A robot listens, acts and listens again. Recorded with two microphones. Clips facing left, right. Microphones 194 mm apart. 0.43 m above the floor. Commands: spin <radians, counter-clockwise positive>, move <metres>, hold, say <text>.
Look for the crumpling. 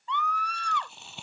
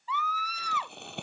spin -1.05
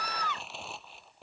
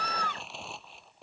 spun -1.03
say Facing the crumpling.